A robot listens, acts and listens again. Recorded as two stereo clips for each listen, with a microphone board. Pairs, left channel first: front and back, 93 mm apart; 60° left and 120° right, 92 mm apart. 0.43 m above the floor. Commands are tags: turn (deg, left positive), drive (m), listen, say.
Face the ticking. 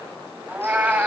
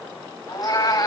<listen/>
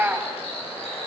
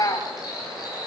<listen/>
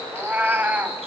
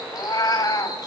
<say>I can't make out ticking to turn to.</say>